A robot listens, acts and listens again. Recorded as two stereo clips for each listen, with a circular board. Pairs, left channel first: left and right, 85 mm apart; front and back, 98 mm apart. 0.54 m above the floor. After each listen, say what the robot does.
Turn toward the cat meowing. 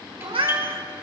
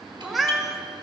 Turn 90° right.
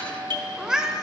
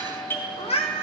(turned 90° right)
Facing the cat meowing.